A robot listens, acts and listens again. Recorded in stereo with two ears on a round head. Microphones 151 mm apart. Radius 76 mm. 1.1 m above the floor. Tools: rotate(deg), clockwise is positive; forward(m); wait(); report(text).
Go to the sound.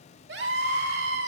rotate(70)
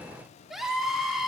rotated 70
forward(1.0)
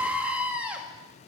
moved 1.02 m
rotate(10)
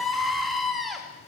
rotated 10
forward(1.0)
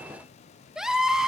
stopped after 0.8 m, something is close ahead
report("Arrived at the scream, straight ahead.")